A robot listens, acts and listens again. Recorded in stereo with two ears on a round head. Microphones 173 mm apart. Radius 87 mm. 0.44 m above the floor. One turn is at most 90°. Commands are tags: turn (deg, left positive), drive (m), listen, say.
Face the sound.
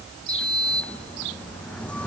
<turn deg="30"/>
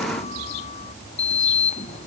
<turn deg="90"/>
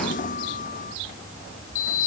<turn deg="40"/>
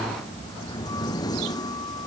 <turn deg="20"/>
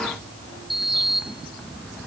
<say>Facing the sliding door.</say>